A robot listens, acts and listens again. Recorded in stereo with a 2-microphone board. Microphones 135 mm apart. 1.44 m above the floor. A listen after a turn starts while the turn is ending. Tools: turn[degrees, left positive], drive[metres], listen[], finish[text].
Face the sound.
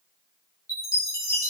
Thought: The chime: about 25° left or 155° left.
Action: turn[25]
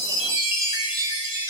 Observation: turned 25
Thought: So it is at 135° left.
Action: turn[135]
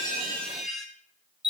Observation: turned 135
Action: finish[Found it: a chime, straight ahead.]